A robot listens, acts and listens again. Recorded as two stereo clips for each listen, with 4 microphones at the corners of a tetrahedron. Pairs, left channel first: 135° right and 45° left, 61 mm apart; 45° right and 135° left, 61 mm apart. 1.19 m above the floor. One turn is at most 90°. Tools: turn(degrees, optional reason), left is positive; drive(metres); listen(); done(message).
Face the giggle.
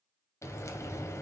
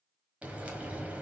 listen()
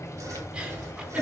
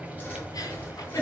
turn(degrees=-25, reason="The giggle: 25° right.")
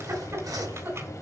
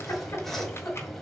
done("Facing the giggle, 2 to 4 m away.")